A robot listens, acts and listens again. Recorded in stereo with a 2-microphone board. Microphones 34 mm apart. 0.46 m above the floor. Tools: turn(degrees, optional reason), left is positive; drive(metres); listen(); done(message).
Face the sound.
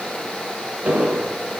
turn(degrees=-55, reason="The explosion: about 55° right or 125° right.")
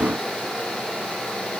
listen()
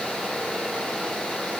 done("I heard an explosion, but can't make it out now. It was about straight ahead or 70° right.")